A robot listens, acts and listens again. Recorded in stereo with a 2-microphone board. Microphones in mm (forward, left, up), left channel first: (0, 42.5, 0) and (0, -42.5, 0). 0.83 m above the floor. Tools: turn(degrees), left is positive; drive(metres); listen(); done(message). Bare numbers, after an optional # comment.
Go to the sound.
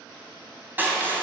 # The crushing: about 20° right or 160° right.
turn(-20)
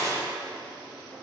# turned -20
# So it is at 140° right.
turn(-140)
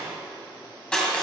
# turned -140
# The crushing is now 10° left.
turn(10)
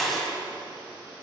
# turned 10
drive(1.0)
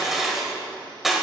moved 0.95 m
drive(1.0)
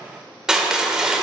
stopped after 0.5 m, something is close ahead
# The crushing is now 10° right.
turn(-10)
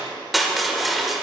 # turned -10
done("Arrived at the crushing, straight ahead.")